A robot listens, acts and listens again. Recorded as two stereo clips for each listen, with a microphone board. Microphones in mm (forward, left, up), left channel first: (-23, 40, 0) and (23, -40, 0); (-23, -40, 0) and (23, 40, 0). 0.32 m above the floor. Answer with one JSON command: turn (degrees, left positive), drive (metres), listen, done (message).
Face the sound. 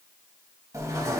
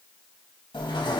{"turn": -105}
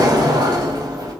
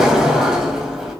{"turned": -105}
{"turn": -25}
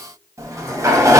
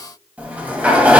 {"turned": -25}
{"turn": -10}
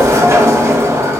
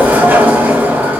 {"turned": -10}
{"done": "Facing the sliding door."}